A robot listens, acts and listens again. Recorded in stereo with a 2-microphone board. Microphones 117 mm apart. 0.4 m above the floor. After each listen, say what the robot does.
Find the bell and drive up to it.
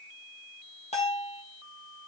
Turn 75° left.
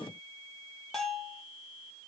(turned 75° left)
Drive 1.0 m forward.
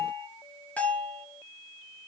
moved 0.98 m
Turn 10° left.
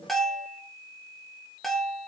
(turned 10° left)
Drive 1.0 m forward.
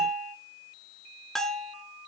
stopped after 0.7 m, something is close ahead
Arrived at the bell, straight ahead.